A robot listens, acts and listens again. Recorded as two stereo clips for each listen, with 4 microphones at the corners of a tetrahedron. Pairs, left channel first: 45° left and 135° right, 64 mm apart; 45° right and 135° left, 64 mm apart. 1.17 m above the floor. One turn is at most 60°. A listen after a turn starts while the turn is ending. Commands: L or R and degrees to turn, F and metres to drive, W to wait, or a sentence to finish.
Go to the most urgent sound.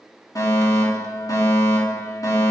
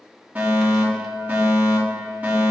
L60
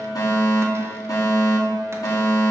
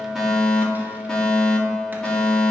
L35
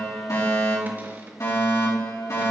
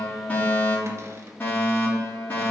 L15
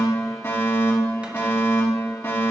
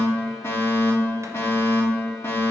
F1.0
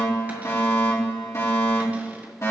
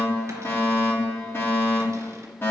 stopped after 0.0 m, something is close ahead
Blocked. The fire alarm is further on, straight ahead.